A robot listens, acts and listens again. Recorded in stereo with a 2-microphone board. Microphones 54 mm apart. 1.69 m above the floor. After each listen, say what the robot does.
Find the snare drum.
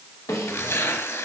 Turn 90° left.
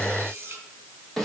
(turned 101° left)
Facing the snare drum.